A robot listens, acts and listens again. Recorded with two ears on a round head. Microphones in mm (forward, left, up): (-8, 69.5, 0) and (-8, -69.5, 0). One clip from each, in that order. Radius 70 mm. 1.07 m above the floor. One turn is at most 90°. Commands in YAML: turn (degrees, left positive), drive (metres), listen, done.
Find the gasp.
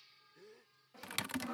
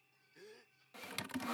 turn: -30
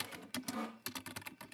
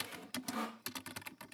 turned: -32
listen: true
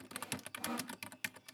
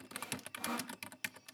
done: "I heard a gasp, but can't make it out now. It was about 5° left or 120° right."